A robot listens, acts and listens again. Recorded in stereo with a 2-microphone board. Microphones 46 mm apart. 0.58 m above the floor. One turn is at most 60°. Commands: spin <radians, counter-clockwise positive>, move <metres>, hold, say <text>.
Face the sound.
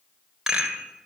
spin -0.52
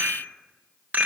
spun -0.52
spin -1.05
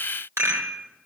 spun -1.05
spin -1.05
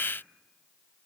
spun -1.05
spin -0.35
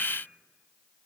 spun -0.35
hold
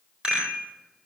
spin -0.35
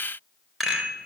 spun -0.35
say Facing the rattle.